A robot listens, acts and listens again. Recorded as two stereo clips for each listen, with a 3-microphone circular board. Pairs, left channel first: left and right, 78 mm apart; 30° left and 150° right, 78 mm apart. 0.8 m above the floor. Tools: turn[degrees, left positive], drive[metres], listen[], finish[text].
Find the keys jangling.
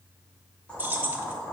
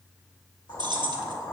Thought: The keys jangling: 155° right.
Action: turn[-155]
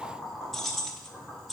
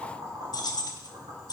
Action: finish[Found it: keys jangling, straight ahead, under 1 m away.]